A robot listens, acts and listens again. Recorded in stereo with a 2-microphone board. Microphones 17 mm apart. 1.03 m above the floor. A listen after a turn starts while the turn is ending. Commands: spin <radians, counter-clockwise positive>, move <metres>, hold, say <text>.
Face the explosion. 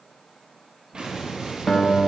spin -1.57
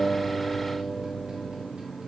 say I heard an explosion from this way, but can't make it out now.